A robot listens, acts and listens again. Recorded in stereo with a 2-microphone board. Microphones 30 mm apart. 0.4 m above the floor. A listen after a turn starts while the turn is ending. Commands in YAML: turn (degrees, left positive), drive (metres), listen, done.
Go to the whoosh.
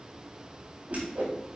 turn: -60
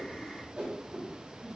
turn: -45
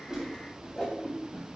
turn: 20
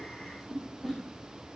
drive: 1.0
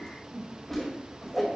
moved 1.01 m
turn: 10
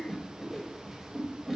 drive: 1.0
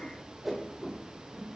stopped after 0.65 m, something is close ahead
done: "Arrived at the whoosh, straight ahead."